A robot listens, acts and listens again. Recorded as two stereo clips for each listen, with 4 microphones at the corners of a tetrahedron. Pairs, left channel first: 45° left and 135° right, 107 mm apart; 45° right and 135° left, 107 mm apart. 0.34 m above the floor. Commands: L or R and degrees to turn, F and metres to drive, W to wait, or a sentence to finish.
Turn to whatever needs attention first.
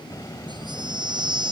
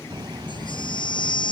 R90
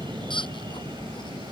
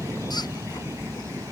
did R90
W
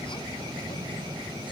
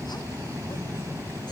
W
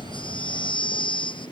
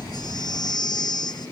Facing the baby crying.